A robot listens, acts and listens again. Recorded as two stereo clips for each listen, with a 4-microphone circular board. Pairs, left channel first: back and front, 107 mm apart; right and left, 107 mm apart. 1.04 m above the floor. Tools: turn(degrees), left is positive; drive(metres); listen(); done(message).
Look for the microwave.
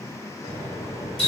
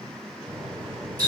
turn(degrees=175)
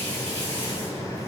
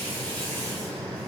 turn(degrees=15)
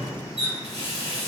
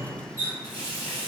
done("Found it: a microwave, straight ahead.")